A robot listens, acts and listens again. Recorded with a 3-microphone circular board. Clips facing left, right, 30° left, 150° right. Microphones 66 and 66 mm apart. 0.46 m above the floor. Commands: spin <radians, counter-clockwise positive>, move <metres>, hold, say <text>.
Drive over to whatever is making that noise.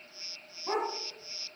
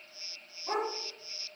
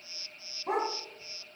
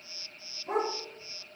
spin 0.35
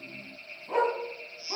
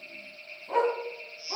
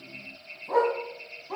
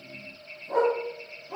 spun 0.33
move 1.0
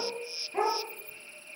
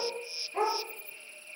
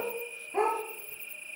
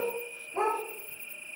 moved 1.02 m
spin 0.26
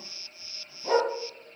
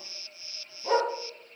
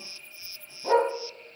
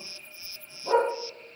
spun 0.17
move 1.0
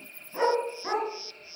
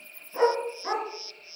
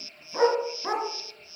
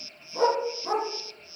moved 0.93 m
move 1.0
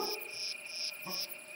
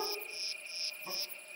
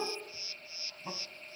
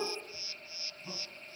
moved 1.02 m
hold
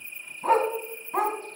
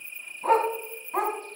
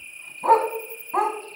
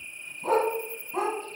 move 1.0
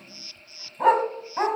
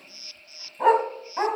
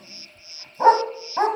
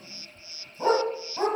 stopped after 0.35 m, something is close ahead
say Arrived at the dog barking, straight ahead.